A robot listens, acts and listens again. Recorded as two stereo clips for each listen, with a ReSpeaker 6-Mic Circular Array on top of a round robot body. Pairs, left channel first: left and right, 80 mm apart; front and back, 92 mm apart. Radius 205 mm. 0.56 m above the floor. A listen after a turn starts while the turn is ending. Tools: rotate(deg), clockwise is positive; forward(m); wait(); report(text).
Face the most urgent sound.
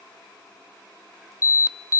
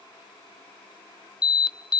rotate(-40)
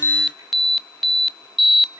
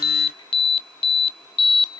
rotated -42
report("Facing the alarm, 1 to 2 m away.")